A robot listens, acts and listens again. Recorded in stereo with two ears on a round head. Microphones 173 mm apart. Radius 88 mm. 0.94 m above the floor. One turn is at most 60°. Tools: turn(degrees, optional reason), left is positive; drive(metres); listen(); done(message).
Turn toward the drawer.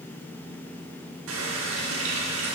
listen()
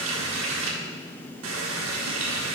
listen()
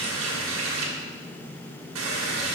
done("I can't make out a drawer, only a running tap.")